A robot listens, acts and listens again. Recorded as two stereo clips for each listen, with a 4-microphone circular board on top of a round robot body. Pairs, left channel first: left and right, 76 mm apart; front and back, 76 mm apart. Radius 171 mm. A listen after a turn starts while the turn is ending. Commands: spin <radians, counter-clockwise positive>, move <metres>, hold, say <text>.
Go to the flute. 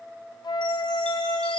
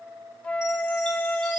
spin 1.31
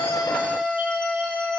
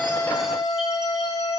move 1.0
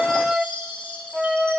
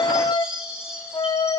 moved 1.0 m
move 1.0
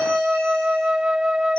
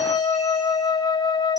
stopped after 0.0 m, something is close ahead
spin -0.17
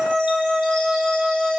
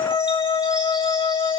say Arrived at the flute, straight ahead.